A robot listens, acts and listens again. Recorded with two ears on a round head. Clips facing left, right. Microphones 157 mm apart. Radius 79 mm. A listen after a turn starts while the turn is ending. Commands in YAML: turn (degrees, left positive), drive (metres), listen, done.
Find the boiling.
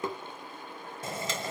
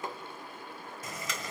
turn: 25
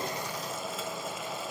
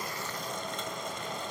done: "Facing the boiling."